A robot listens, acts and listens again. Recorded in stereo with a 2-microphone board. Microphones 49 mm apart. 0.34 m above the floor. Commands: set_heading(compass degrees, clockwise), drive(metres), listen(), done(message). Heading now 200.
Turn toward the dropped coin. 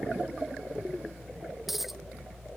set_heading(230)
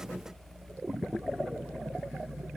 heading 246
listen()
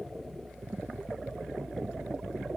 done("I heard a dropped coin, but can't make it out now. It was about 45° left or 130° right.")